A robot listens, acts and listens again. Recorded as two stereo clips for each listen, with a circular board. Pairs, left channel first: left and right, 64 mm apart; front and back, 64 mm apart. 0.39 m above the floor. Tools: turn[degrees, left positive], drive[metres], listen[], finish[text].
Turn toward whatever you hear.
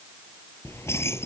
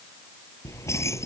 Thought: The keys jangling: 40° left.
Action: turn[40]
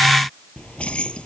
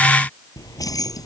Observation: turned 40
Thought: The keys jangling is now 15° left.
Action: turn[15]
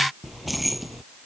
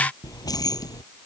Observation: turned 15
Action: finish[Found it: keys jangling, straight ahead.]